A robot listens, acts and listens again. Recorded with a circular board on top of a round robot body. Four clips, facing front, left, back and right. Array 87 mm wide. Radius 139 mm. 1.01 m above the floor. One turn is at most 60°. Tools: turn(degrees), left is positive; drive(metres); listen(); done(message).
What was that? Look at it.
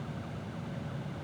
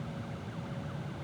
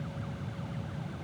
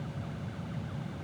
listen()
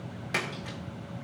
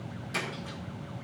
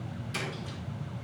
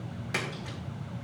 turn(degrees=-30)
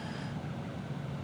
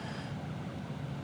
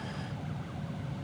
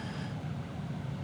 done("I heard a splash from this way, but can't make it out now.")